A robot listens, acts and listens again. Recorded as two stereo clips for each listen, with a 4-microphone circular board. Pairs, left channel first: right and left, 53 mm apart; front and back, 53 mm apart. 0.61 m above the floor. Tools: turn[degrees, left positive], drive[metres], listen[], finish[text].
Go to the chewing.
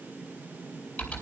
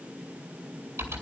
Action: listen[]
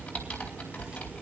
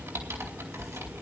Action: listen[]
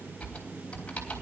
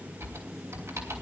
Action: finish[I can't make out chewing, only typing on a keyboard.]